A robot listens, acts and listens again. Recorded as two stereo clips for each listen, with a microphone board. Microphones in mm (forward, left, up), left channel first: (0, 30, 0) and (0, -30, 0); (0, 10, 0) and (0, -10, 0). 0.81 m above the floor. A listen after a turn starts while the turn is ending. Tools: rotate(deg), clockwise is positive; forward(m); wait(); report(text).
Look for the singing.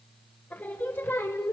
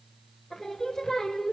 rotate(-45)
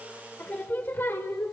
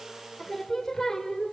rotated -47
rotate(-50)
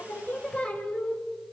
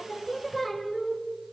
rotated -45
rotate(-25)
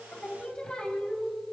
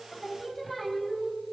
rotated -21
rotate(-20)
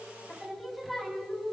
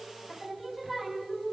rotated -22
report("Found it: singing, straight ahead.")